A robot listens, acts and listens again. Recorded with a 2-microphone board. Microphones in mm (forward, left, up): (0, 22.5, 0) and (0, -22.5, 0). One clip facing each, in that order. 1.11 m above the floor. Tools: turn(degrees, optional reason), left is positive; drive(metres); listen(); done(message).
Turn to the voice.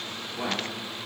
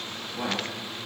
turn(degrees=-40, reason="The man speaking: about 40° right or 140° right.")
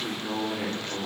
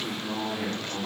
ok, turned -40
done("Facing the man speaking.")